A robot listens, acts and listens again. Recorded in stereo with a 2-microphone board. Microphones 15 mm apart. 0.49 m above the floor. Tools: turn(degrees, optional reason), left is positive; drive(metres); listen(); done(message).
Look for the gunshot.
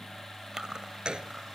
turn(degrees=-70, reason="The gunshot: about 70° right or 110° right.")
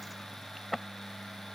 listen()
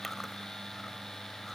done("I heard a gunshot, but can't make it out now. It was about straight ahead or 40° right.")